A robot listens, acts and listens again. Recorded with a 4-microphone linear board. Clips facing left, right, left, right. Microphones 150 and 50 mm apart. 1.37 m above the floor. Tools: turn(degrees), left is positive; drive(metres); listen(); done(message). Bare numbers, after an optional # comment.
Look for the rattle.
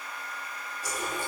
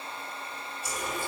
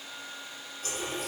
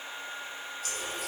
listen()
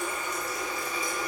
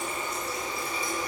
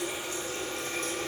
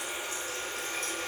listen()
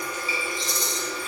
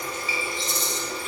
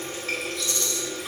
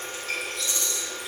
# The rattle: about 25° right or 155° right.
turn(-25)
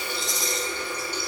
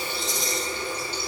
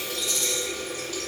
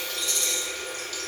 done("Facing the rattle.")